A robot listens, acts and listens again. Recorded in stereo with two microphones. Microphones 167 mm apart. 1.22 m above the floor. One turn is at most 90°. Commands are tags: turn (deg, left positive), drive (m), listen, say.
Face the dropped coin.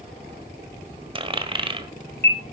<turn deg="-30"/>
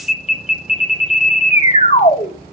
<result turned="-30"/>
<listen/>
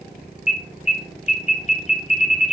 <say>I heard a dropped coin, but can't make it out now. It was about straight ahead or 120° right.</say>